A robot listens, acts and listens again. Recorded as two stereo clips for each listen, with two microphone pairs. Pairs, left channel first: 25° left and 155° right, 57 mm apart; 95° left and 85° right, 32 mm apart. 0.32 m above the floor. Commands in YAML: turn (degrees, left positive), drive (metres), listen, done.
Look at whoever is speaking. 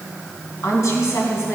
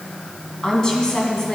turn: 30
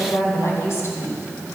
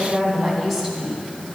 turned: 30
done: "Facing the woman speaking, 2 to 4 m away."